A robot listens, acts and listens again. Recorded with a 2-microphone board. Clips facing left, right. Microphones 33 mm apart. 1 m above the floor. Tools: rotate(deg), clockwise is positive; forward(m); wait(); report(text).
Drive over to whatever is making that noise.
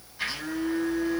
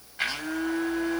rotate(50)
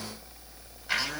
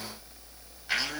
forward(1.0)
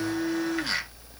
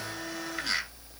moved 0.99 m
rotate(-10)
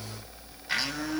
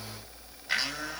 forward(1.0)
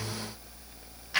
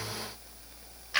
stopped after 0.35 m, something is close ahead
report("I am next to the blender.")